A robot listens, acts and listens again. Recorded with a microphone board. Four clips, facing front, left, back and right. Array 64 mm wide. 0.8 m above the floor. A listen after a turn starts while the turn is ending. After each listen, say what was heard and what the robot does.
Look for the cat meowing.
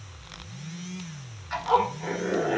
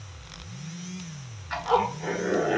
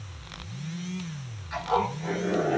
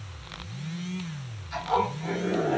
Keep listening.
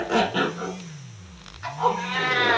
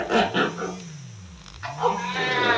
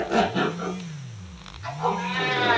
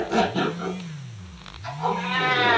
The cat meowing: 65° right. Turn 65° right.
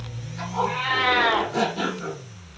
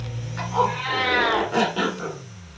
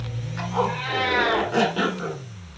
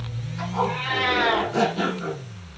The cat meowing is now 10° left. Turn 10° left.
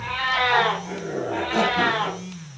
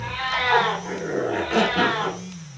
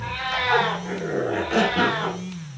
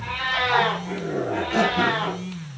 Found it: a cat meowing, straight ahead, 1 to 2 m away.